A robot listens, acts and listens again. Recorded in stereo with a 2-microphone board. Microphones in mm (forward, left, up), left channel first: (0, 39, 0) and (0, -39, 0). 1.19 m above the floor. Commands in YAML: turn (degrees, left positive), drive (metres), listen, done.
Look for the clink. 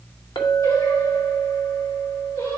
turn: 90
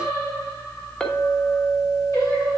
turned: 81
turn: 15
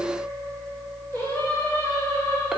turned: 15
done: "Found it: a clink, straight ahead, under 1 m away."